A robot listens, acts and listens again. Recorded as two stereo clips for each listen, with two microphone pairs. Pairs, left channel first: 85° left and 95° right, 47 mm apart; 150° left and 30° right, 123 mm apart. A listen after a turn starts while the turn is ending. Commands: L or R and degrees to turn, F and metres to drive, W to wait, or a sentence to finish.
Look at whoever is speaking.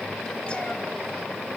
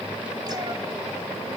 W
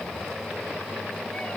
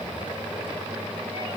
W
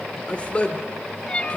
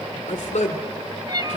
L145
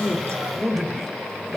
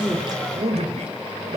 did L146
R10
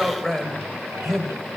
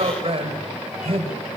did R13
Found it: a man speaking, straight ahead.